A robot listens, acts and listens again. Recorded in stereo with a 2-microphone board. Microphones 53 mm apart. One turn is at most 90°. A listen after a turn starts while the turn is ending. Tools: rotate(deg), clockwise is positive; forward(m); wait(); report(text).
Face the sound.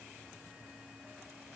wait()
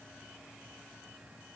wait()
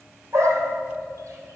rotate(70)
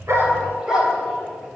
rotate(15)
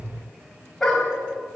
report("Facing the dog barking, over 4 m away.")